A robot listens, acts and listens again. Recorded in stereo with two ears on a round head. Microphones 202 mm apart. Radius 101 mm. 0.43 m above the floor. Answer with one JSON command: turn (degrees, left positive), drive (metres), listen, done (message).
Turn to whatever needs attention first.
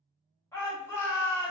{"turn": 30}
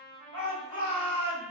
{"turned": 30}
{"turn": 135}
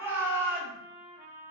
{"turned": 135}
{"turn": -15}
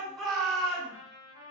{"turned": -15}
{"done": "Found it: a shout, straight ahead."}